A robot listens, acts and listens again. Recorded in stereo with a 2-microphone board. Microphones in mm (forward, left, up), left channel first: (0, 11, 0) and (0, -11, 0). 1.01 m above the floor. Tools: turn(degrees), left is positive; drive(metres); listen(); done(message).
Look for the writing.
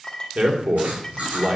turn(degrees=-90)
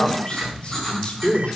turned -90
turn(degrees=10)
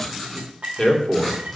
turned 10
done("Facing the writing, over 4 m away.")